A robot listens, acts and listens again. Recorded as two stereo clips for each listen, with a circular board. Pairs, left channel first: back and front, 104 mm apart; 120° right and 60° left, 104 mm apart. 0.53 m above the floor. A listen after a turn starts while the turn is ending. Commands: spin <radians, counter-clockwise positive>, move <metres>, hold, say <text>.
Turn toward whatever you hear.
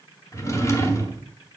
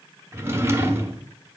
spin 2.18
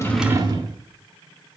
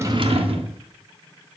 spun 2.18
spin 0.79
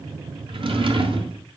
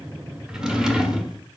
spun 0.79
spin -0.44
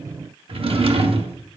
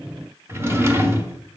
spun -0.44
say Facing the drawer, under 1 m away.